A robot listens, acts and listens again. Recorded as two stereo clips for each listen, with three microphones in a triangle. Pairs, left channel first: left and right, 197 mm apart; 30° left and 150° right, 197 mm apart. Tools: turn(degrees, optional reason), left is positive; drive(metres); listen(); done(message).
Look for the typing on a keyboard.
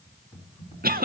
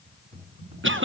turn(degrees=155, reason="The typing on a keyboard: 155° left.")
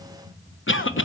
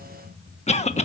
turn(degrees=15, reason="The typing on a keyboard is now 15° left.")
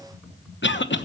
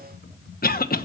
done("Facing the typing on a keyboard.")